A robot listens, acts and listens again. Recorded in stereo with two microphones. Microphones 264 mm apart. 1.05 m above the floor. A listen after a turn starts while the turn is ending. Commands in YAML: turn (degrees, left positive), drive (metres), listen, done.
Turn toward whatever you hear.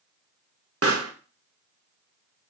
turn: -60
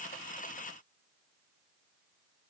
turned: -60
listen: true
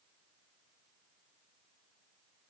done: "I heard a pop, but can't make it out now. It was about straight ahead or 60° right."